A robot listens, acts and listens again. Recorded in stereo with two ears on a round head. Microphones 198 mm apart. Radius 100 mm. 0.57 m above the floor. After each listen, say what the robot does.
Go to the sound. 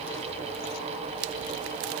Keep listening.
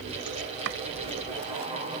Turn 60° right.
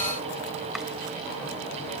Keep listening.
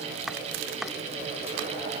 Drive 1.0 m forward.
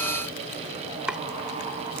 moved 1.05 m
Drive 1.0 m forward.
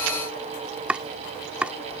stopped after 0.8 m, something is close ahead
Arrived at the chopping, straight ahead.